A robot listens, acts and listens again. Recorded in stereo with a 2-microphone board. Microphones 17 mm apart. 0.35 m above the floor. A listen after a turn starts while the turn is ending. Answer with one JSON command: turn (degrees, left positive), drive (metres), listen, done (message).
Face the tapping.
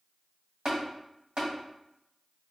{"turn": -65}
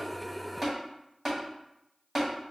{"turn": -25}
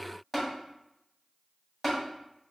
{"done": "Found it: tapping, straight ahead, 1 to 2 m away."}